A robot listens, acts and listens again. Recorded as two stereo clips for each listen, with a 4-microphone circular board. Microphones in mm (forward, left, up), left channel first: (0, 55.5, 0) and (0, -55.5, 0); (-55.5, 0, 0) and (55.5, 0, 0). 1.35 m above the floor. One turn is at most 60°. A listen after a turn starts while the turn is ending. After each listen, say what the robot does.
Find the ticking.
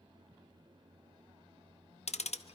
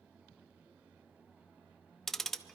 Turn 60° left.
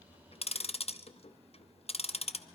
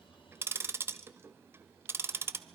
Turn 60° left.
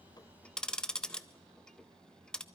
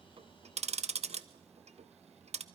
Facing the ticking, under 1 m away.